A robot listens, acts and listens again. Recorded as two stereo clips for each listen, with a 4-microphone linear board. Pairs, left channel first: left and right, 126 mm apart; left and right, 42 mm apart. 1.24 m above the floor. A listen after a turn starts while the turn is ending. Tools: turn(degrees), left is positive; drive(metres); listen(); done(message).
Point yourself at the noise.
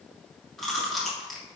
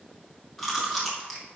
turn(degrees=30)
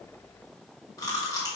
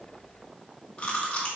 turn(degrees=150)
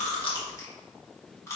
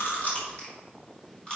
turn(degrees=25)
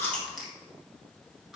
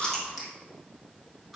done("Facing the chewing.")